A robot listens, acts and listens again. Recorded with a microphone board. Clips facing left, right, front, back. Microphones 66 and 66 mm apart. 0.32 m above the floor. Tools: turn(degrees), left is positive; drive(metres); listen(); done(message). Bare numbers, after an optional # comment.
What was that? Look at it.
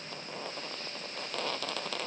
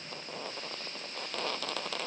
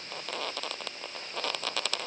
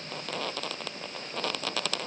listen()
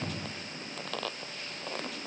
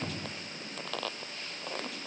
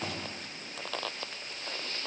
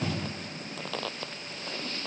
listen()
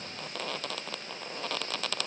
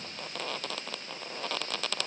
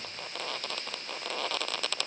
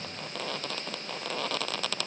done("I can't make out anything to turn to.")